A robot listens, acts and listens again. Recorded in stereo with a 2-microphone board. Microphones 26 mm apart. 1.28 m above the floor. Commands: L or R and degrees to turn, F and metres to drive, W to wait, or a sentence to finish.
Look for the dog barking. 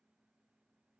W
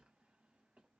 W
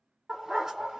R25
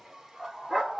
R25
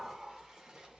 W
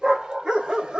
R40
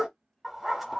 R10
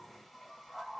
Found it: a dog barking, straight ahead.